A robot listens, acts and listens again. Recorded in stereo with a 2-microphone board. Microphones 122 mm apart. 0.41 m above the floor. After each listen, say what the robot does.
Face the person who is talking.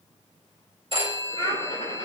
Turn 40° left.
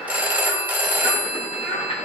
Turn 95° left.
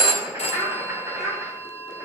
Found it: a child speaking, straight ahead.